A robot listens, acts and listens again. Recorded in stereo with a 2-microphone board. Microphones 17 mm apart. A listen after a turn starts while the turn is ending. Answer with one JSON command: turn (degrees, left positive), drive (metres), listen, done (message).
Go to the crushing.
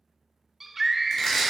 {"turn": 30}
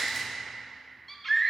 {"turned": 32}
{"listen": true}
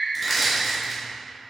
{"drive": 1.0}
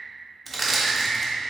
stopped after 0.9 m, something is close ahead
{"done": "I am next to the crushing."}